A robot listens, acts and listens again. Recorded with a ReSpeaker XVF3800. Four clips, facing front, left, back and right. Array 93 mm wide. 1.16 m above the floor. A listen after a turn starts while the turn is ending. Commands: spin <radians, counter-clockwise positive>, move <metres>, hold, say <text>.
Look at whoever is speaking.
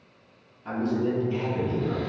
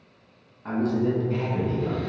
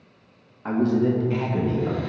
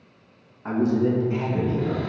spin 3.05
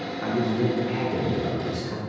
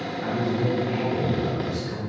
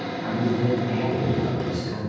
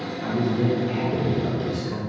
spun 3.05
spin -0.87
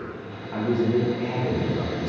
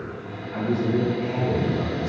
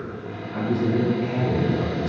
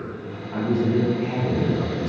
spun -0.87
spin -0.70
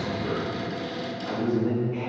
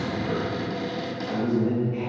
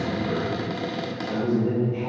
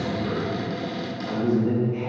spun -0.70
say Found it: a man speaking, straight ahead.